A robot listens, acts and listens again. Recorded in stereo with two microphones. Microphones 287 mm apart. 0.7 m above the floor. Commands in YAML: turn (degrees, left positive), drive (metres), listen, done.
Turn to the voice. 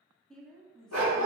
turn: 30
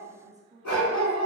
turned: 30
turn: -30
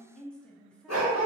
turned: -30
done: "Facing the woman speaking, under 1 m away."